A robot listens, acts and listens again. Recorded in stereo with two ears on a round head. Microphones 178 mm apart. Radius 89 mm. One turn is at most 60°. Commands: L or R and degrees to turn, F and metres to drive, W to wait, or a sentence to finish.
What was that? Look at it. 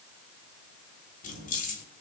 L45
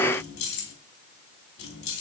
L60
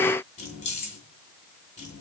L35
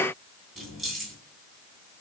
Found it: keys jangling, straight ahead.